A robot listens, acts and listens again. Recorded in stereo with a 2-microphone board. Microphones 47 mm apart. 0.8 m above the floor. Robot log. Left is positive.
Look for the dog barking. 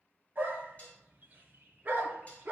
note: The dog barking: about 35° right or 145° right.
cmd yaw -35
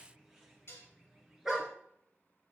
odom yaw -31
end: Facing the dog barking, 2 to 4 m away.